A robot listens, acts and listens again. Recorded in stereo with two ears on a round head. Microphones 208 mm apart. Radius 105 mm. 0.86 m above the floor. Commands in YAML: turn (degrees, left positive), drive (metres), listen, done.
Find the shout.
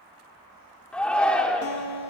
turn: 30
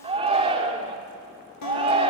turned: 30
turn: -25
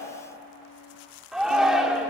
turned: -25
done: "Found it: a shout, straight ahead."